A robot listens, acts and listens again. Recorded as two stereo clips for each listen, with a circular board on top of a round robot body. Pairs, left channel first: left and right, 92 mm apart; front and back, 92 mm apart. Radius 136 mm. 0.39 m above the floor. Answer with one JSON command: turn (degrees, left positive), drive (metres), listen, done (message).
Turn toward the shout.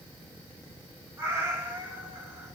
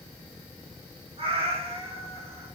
{"listen": true}
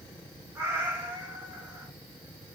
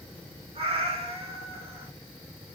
{"listen": true}
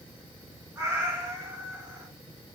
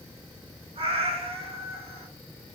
{"done": "I can't make out a shout, only a cat meowing."}